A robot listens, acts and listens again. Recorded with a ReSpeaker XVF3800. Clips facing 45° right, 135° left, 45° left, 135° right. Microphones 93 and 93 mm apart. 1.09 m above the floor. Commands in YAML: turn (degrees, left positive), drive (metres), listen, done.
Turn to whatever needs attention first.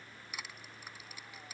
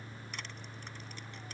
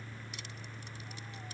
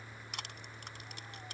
listen: true
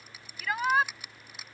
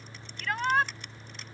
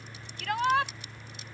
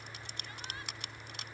turn: 40
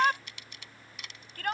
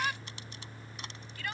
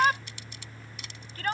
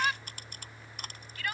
done: "Found it: a shout, straight ahead."